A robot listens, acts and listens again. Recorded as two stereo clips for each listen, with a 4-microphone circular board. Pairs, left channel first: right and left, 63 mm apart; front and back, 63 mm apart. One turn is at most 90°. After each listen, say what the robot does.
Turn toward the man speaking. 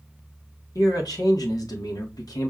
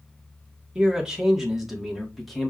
Turn 90° right.
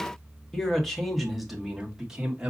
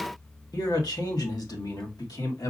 Turn 15° left.
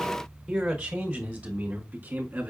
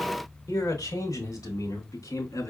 Turn 25° left.
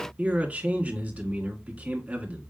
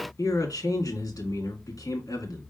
Turn 20° left.
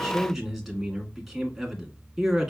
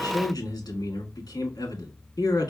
Facing the man speaking, 2 to 4 m away.